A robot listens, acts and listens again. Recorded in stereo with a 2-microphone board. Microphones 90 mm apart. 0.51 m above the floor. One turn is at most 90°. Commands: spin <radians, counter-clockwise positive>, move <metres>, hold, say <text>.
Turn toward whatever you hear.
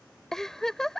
spin 0.52
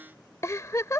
spin 1.57
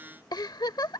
spin 0.96
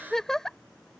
say Facing the giggle.